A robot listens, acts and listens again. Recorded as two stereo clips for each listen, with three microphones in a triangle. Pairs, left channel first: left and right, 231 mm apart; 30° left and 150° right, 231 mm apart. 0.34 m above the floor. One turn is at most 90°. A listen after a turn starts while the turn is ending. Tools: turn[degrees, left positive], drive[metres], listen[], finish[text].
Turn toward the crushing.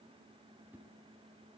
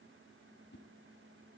Action: listen[]
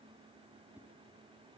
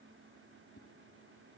Action: listen[]
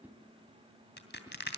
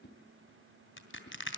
Thought: The crushing: 55° left.
Action: turn[55]
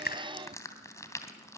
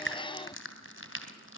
Thought: The crushing is now 15° left.
Action: turn[15]
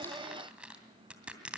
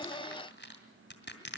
Action: finish[Facing the crushing.]